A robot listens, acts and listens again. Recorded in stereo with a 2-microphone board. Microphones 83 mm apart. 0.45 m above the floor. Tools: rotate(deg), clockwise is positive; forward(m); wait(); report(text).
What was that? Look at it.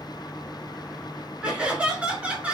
rotate(15)
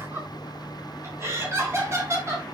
rotate(35)
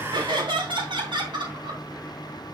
rotate(105)
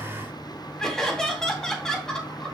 rotate(-10)
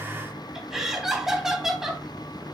report("Facing the laughter, 2 to 4 m away.")